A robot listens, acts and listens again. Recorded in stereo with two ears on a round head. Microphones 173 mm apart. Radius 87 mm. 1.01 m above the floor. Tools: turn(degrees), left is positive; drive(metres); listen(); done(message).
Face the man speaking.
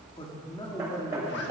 turn(degrees=15)
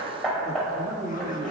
turn(degrees=-25)
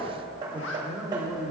turn(degrees=-15)
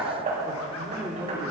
turn(degrees=-10)
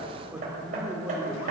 done("Found it: a man speaking, straight ahead.")